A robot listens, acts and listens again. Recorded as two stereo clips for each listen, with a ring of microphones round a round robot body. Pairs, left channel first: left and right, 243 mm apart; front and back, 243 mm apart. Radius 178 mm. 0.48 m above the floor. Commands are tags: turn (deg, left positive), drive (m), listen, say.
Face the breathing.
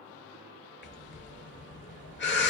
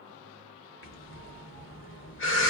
<turn deg="40"/>
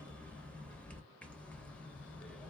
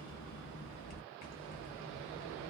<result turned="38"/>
<say>Facing the breathing, under 1 m away.</say>